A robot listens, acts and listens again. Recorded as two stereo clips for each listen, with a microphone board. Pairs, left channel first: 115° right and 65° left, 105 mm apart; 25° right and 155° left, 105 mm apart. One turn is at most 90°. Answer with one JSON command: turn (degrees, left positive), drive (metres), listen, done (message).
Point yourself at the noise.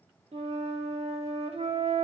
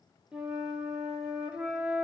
{"turn": 75}
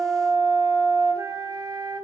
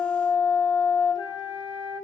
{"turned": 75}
{"turn": 15}
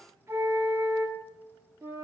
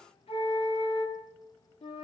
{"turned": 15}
{"done": "Facing the flute, 1 to 2 m away."}